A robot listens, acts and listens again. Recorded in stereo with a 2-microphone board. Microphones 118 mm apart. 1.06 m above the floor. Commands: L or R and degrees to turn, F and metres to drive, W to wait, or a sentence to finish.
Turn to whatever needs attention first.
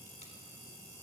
W
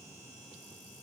W
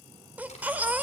R30
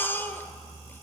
L15
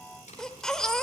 Facing the baby crying.